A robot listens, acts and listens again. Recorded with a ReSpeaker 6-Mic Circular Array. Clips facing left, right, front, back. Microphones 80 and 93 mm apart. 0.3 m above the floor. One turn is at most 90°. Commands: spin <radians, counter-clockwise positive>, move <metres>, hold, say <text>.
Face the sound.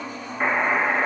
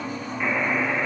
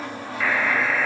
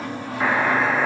spin 1.57
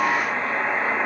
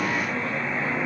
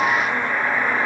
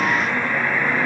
spin 1.22
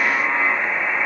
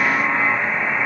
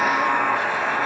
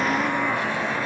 say Facing the buzzer, 2 to 4 m away.